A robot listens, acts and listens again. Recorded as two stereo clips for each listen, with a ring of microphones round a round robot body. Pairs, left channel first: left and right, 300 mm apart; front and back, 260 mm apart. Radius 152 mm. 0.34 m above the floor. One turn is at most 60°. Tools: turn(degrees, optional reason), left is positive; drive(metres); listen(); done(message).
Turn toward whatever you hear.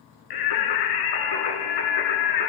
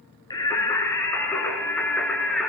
turn(degrees=60, reason="The singing: 90° left.")
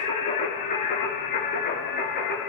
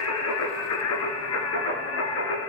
turn(degrees=30, reason="The singing is now 30° left.")
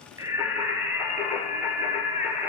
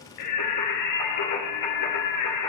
done("Facing the singing, 2 to 4 m away.")